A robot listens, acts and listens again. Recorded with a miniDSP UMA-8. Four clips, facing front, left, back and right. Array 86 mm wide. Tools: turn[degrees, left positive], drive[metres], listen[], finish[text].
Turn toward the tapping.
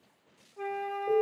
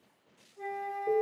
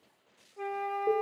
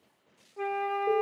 Action: listen[]
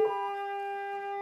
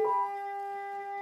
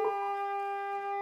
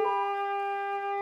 Action: listen[]
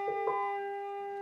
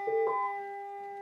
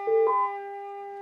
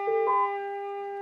Action: finish[I can't make out tapping to turn to.]